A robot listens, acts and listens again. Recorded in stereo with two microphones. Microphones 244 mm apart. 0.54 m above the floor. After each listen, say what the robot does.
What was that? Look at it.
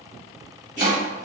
Turn 30° right.
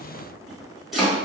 Facing the chopping.